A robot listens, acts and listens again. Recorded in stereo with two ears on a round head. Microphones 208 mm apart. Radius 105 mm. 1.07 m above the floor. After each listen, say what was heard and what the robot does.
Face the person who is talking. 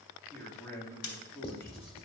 Turn 30° left.
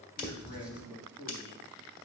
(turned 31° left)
So it is at 140° left. Turn 140° left.
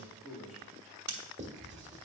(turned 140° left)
Found it: a man speaking, straight ahead.